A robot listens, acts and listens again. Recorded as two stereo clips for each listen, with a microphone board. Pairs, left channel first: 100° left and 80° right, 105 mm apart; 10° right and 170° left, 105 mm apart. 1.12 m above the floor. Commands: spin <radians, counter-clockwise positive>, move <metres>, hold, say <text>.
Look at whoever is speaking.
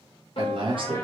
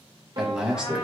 spin -1.83
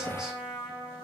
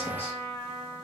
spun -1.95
hold
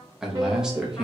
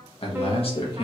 say Facing the man speaking, 1 to 2 m away.